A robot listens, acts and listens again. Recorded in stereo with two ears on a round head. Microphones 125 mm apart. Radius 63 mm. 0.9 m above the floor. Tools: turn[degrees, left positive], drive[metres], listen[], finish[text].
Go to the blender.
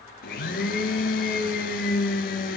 Thought: The blender: about 70° left or 110° left.
Action: turn[70]
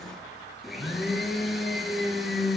Action: drive[1.0]
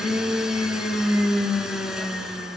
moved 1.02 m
Action: drive[1.0]
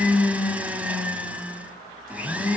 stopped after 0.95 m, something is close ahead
Thought: The blender is now 10° right.
Action: turn[-10]
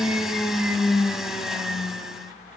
Action: finish[Arrived at the blender, straight ahead.]